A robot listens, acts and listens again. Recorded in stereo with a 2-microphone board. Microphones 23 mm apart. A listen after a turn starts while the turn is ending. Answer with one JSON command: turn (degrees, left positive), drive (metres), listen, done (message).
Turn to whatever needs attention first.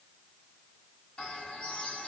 {"listen": true}
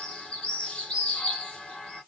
{"listen": true}
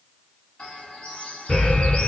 {"turn": 65}
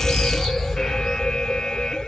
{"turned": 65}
{"turn": 50}
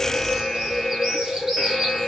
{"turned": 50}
{"done": "Facing the alarm."}